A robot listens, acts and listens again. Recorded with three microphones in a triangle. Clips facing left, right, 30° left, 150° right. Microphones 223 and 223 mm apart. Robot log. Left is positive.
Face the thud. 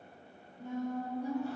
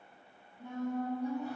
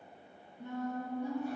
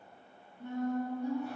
cmd idle
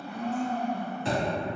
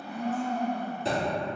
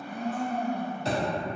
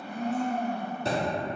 note: The thud: 130° right.
cmd yaw -130
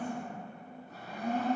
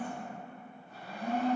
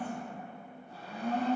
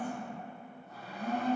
end: Facing where the thud came from. I can't hear it now.